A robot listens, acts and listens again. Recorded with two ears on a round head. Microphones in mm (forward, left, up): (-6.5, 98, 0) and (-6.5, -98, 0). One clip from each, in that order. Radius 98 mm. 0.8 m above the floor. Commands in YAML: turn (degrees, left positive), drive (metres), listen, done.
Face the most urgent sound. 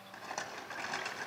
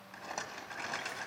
listen: true
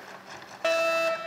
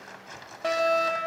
turn: 25
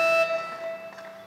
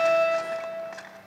turn: 125
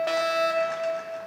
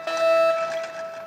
done: "Found it: a fire alarm, straight ahead."